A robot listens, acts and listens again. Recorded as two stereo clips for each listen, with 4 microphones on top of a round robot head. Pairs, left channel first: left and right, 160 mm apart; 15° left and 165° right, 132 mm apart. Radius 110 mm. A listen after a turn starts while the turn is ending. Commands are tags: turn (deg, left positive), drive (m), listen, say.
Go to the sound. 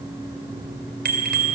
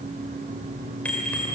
<turn deg="-70"/>
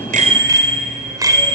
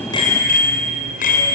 <turn deg="-20"/>
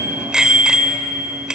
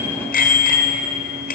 <drive m="1.0"/>
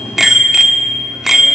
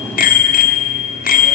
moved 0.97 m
<drive m="1.0"/>
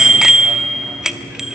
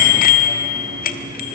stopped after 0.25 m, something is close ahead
<say>Arrived at the bicycle bell, straight ahead.</say>